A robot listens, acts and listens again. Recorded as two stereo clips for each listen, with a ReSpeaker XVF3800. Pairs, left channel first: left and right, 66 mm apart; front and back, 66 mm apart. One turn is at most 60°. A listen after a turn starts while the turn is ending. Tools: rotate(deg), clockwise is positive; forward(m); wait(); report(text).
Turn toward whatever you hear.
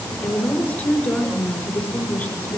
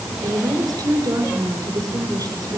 rotate(-60)
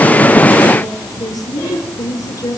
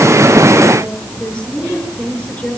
rotate(-60)
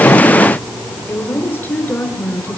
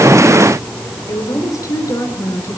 rotate(-30)
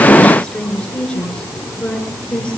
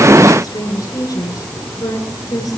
rotate(-15)
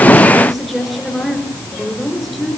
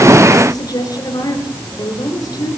report("Found it: a woman speaking, straight ahead, over 4 m away.")